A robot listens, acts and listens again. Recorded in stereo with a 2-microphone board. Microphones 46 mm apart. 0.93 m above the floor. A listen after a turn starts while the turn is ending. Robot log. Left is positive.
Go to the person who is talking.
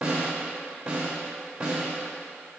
cmd idle
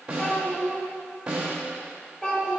note: The child speaking: about 20° left or 160° left.
cmd yaw +20
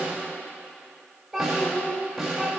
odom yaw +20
cmd fwd 1.0
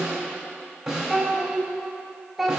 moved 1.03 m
cmd fwd 1.0
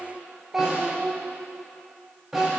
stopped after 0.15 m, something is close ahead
end: Arrived at the child speaking, straight ahead.